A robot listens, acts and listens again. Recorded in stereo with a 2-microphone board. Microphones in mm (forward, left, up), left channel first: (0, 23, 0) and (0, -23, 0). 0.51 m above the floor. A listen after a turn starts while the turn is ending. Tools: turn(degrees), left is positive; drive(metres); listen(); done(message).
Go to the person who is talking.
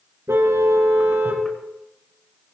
listen()
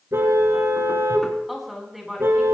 turn(degrees=-30)
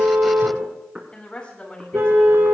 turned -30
turn(degrees=25)
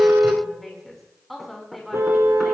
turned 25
drive(metres=1.0)
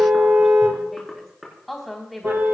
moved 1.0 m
drive(metres=1.0)
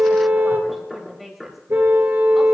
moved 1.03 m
drive(metres=1.0)
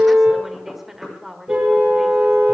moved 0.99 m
turn(degrees=-10)
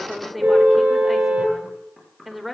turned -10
drive(metres=1.0)
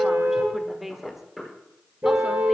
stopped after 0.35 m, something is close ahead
turn(degrees=-10)
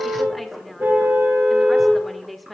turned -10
done("I am next to the woman speaking.")